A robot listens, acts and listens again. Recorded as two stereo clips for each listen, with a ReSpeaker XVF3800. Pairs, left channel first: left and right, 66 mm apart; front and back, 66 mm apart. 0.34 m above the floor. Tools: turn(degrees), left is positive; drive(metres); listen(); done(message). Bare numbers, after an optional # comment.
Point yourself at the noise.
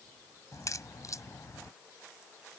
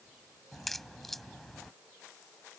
# The crack: 85° left.
turn(85)
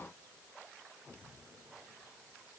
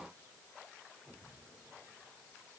done("Facing where the crack came from. I can't hear it now.")